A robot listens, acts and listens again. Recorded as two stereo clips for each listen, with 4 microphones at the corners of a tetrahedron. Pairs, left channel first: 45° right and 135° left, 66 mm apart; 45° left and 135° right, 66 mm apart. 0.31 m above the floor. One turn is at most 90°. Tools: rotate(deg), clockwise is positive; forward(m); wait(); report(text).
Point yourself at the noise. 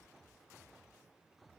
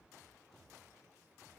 wait()
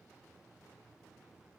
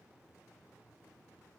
wait()
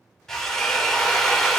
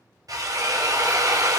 rotate(90)
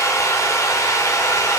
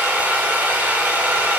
rotate(70)
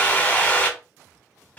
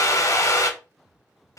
rotate(-20)
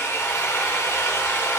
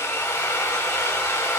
report("Facing the drill, under 1 m away.")